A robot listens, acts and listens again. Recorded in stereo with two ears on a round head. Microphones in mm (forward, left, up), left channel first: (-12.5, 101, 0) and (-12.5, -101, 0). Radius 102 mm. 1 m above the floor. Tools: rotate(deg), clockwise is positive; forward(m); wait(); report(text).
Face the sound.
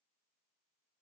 wait()
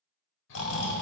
rotate(-55)
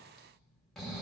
report("Found it: snoring, straight ahead.")